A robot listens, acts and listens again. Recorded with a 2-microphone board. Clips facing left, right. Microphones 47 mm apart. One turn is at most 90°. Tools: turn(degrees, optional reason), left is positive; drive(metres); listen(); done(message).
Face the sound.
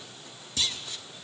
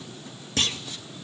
turn(degrees=-50, reason="The clunk: about 50° right or 130° right.")
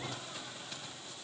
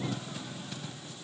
listen()
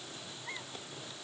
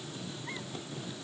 done("I heard a clunk, but can't make it out now. It was about straight ahead or 80° right.")